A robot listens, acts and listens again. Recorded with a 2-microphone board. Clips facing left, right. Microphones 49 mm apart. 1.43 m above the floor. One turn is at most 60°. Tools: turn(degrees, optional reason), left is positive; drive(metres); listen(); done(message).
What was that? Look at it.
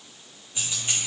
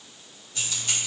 turn(degrees=25, reason="The keys jangling: about 25° left or 155° left.")
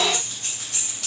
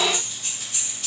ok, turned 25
turn(degrees=60, reason="So it is at 110° left.")
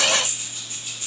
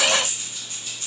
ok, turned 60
turn(degrees=25, reason="The keys jangling is now 25° left.")
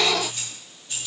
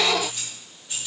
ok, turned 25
turn(degrees=-10, reason="The keys jangling is now 10° right.")
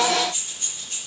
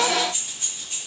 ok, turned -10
done("Found it: keys jangling, straight ahead, 2 to 4 m away.")